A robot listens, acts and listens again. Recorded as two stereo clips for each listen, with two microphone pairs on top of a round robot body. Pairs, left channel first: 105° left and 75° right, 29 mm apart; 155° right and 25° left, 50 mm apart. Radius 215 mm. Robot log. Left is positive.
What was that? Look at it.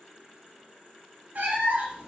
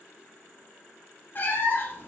note: The cat meowing: 105° right.
cmd yaw -105
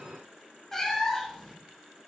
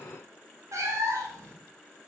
note: The cat meowing is now 25° left.
cmd yaw +25
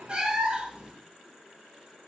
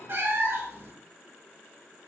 note: The cat meowing is now 20° right.
cmd yaw -20
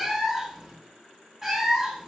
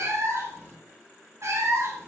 end: Facing the cat meowing.